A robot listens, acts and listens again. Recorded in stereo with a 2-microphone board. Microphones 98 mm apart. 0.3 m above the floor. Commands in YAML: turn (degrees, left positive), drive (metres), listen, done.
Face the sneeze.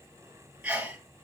turn: -30
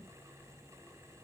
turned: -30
listen: true
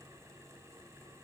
done: "I heard a sneeze, but can't make it out now. It was about 20° left or 140° right."